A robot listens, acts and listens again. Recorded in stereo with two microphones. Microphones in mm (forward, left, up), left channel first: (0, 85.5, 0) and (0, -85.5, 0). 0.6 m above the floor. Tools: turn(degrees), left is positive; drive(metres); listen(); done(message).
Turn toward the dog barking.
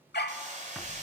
turn(degrees=90)
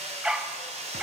done("Found it: a dog barking, straight ahead, under 1 m away.")